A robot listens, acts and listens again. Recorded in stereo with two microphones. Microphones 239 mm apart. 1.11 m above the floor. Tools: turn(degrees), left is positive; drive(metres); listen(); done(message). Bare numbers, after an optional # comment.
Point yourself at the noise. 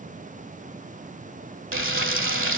# The frying: about 55° right or 125° right.
turn(-55)
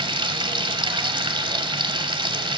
# So it is at 25° right.
turn(-25)
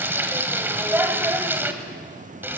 # The frying is now 10° right.
turn(-10)
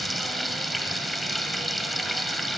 done("Found it: frying, straight ahead, 1 to 2 m away.")